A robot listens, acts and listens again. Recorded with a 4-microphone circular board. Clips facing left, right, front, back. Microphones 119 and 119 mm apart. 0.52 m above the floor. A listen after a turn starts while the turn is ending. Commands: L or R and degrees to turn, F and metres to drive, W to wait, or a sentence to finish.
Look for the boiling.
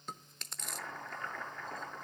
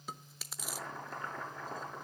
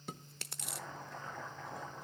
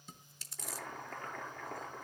R155
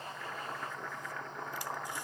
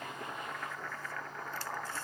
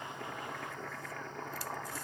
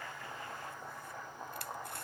L15
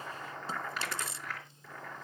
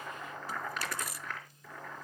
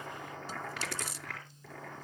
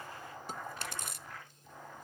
Facing the boiling.